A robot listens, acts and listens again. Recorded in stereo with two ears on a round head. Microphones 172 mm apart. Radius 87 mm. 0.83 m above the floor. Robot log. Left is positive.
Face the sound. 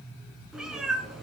cmd yaw +30
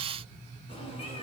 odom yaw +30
note: So it is at 150° left.
cmd yaw +150
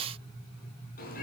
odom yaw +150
cmd idle
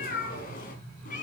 note: The cat meowing is now 40° left.
cmd yaw +40
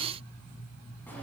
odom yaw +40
cmd idle
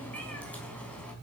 end: Found it: a cat meowing, straight ahead.